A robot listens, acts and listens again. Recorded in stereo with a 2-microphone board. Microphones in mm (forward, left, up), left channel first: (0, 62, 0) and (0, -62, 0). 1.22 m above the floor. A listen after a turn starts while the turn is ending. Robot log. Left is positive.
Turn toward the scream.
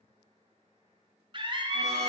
note: The scream: about 40° right or 140° right.
cmd yaw -40
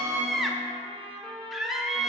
end: Found it: a scream, straight ahead.